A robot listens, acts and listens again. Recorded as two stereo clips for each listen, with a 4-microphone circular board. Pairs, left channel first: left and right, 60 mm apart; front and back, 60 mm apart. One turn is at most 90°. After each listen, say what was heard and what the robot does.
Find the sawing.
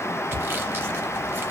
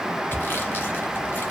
The sawing: 45° right. Turn 45° right.
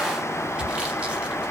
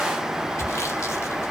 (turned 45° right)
The sawing is now 15° right. Turn 15° right.
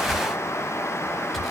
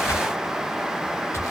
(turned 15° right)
Found it: sawing, straight ahead, under 1 m away.